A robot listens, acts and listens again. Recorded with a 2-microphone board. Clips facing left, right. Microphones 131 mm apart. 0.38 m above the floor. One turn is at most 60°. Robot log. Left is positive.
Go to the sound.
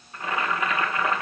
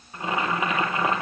note: The boiling: about 20° right or 160° right.
cmd yaw -20
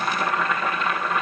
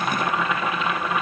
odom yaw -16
cmd fwd 1.0
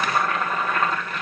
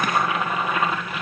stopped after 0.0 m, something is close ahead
note: The boiling is now 10° right.
cmd yaw -10
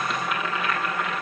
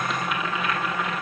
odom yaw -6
end: Blocked. The boiling is further on, straight ahead.